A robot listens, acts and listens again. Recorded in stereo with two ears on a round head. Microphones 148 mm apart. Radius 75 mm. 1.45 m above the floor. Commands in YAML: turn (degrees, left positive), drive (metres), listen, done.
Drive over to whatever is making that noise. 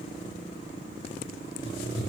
turn: 70
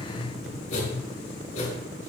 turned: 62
turn: 50
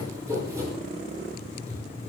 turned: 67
turn: -20
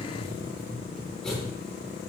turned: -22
drive: 1.0
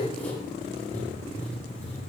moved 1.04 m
turn: 10
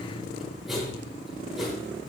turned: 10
drive: 1.0
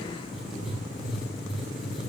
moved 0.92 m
drive: 1.0
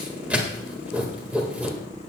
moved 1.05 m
turn: -10
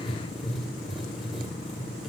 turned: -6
drive: 1.0
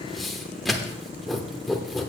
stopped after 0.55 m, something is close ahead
done: "I am next to the writing."